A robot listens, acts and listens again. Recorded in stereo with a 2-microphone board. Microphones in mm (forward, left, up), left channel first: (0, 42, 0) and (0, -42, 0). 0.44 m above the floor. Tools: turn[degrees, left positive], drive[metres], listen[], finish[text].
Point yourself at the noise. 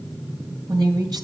Thought: The woman speaking: about 60° right or 120° right.
Action: turn[-60]
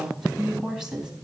Thought: So it is at 10° right.
Action: turn[-10]
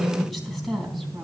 Action: finish[Found it: a woman speaking, straight ahead.]